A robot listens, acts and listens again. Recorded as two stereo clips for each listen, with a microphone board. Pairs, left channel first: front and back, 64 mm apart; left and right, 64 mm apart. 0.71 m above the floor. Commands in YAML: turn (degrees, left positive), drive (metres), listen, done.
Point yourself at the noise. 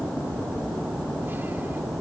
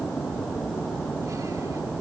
listen: true
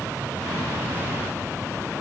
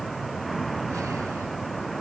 listen: true
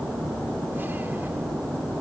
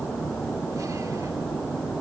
done: "I can't make out anything to turn to."